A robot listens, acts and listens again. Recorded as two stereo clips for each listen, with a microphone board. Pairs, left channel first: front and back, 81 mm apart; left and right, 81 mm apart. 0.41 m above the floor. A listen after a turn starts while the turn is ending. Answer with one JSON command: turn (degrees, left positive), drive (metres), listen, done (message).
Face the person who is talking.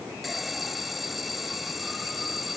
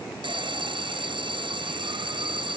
{"listen": true}
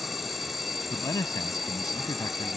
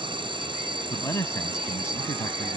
{"turn": 40}
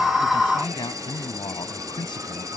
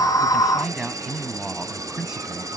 {"done": "Facing the man speaking."}